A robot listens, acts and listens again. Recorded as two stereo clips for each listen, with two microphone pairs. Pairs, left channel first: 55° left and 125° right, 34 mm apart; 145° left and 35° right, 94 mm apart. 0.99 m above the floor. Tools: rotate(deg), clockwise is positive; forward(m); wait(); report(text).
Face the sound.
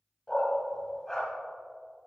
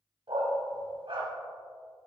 rotate(25)
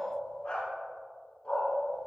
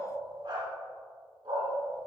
rotate(10)
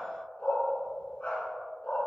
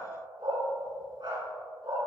report("Facing the dog barking, over 4 m away.")